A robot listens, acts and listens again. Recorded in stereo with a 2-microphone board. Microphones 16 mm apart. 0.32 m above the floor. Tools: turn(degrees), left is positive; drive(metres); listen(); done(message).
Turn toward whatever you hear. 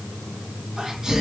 turn(degrees=-35)
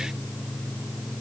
listen()
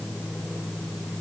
done("I heard a sneeze, but can't make it out now. It was about straight ahead or 110° right.")